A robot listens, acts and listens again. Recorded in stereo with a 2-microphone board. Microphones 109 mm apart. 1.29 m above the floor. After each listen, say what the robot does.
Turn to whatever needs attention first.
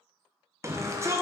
Turn 25° right.
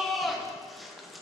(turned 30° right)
Facing the shout, 1 to 2 m away.